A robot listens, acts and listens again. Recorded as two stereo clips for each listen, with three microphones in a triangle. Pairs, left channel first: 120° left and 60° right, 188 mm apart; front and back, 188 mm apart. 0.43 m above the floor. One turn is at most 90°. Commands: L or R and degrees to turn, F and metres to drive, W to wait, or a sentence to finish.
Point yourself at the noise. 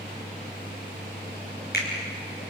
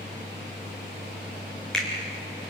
L85
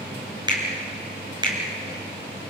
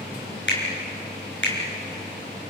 L10
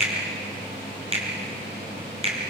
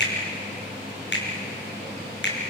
Found it: a finger snap, straight ahead.